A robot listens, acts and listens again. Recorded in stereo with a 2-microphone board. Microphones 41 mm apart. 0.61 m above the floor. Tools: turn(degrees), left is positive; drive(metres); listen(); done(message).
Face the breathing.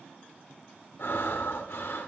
turn(degrees=65)
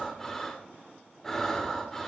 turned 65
turn(degrees=10)
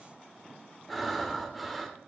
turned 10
done("Facing the breathing, 1 to 2 m away.")